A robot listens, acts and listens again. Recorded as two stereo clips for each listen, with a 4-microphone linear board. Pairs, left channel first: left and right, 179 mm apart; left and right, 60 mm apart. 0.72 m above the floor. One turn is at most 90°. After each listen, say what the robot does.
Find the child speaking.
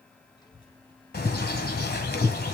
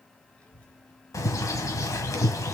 Turn 30° left.
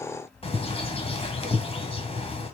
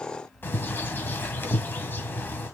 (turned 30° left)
Turn 90° left.
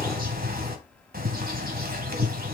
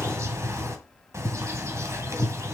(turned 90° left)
Turn 50° right.
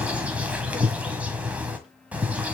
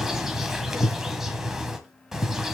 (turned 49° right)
Keep listening.
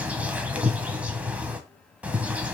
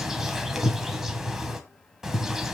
Facing the child speaking.